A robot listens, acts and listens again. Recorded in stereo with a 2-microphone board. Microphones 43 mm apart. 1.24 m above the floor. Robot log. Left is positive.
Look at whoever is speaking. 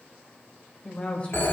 note: The woman speaking: about 35° left or 145° left.
cmd yaw +35
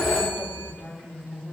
note: So it is at 110° left.
cmd yaw +110
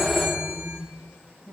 note: The woman speaking is now 10° left.
cmd yaw +10
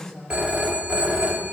end: Found it: a woman speaking, straight ahead, over 4 m away.